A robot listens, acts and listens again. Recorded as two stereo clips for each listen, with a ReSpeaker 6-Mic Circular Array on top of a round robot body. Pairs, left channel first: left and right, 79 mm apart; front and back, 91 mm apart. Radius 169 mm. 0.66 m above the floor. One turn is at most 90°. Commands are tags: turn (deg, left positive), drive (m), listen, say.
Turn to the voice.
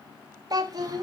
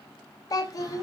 <turn deg="-50"/>
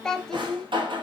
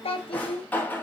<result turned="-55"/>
<say>Facing the child speaking, under 1 m away.</say>